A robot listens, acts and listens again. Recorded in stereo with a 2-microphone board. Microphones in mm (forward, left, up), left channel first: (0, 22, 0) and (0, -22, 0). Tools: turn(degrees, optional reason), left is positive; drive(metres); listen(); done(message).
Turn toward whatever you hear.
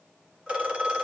turn(degrees=-20, reason="The phone ringing: about 20° right or 160° right.")
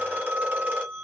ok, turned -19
turn(degrees=-140, reason="So it is at 140° right.")
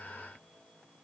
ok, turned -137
listen()
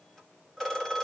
done("Facing the phone ringing, 2 to 4 m away.")